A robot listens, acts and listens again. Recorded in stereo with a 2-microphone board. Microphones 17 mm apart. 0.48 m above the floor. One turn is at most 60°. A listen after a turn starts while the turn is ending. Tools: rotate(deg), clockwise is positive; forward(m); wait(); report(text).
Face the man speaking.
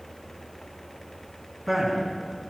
rotate(30)
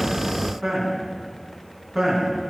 rotate(20)
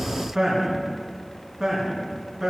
rotate(60)
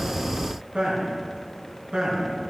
rotate(60)
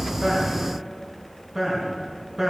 rotate(30)
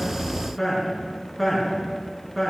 report("Found it: a man speaking, straight ahead, over 4 m away.")